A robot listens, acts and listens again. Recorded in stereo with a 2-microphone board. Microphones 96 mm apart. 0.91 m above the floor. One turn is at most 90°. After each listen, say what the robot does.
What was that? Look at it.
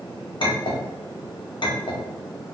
Turn 55° left.
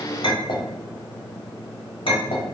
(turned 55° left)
Turn 70° left.
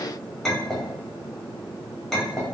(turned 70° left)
Facing the clink, 1 to 2 m away.